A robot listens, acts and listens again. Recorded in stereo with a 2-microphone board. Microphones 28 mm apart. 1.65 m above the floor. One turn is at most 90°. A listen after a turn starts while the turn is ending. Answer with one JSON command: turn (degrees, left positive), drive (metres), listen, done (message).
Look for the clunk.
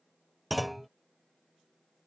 {"turn": 30}
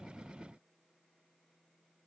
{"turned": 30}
{"listen": true}
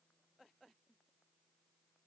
{"done": "I heard a clunk, but can't make it out now. It was about 25° right or 145° left."}